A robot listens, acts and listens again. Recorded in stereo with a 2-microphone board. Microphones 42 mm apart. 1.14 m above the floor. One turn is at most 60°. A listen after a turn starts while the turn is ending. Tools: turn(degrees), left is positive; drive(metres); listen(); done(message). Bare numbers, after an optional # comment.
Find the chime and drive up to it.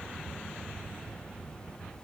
listen()
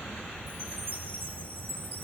# The chime: about 60° right or 120° right.
turn(-60)
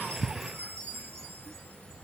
# So it is at 60° right.
turn(-60)
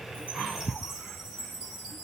# The chime is now 10° right.
turn(-10)
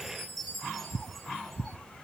drive(1.0)
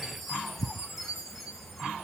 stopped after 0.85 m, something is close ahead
done("Blocked. The chime is further on, straight ahead.")